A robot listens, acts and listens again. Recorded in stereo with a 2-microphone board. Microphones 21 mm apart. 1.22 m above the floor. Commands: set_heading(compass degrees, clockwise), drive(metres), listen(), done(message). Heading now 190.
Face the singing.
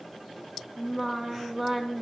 set_heading(220)
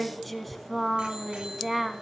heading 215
set_heading(245)
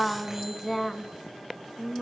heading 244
set_heading(214)
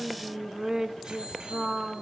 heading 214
set_heading(244)
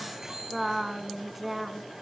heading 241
done("Found it: singing, straight ahead.")